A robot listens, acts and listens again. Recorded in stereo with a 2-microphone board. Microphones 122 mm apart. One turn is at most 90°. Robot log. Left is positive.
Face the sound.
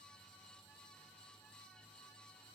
cmd idle
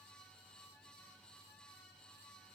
cmd idle
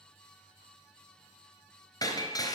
note: The breaking glass: about 35° left or 145° left.
cmd yaw +35
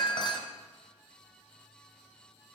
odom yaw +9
note: The breaking glass: about 40° left or 140° left.
cmd yaw +40
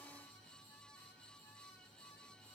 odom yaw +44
cmd idle
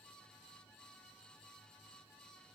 end: I heard breaking glass, but can't make it out now. It was about straight ahead or 95° left.